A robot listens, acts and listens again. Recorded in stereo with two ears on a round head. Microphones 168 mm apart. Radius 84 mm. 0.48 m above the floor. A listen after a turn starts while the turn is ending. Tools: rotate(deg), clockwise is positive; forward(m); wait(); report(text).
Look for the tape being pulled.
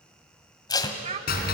rotate(-20)
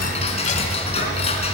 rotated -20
wait()
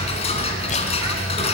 wait()
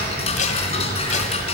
rotate(-140)
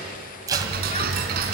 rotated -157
rotate(20)
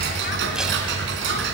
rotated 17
wait()
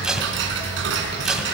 report("Found it: tape being pulled, straight ahead, 1 to 2 m away.")